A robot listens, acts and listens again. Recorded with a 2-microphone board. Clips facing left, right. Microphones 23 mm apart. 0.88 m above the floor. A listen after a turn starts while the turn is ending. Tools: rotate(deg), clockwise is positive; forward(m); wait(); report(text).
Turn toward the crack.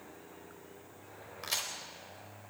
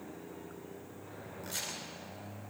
rotate(-55)
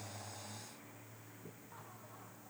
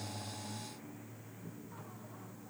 wait()
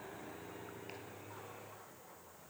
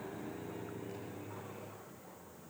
report("I heard a crack, but can't make it out now. It was about straight ahead or 70° left.")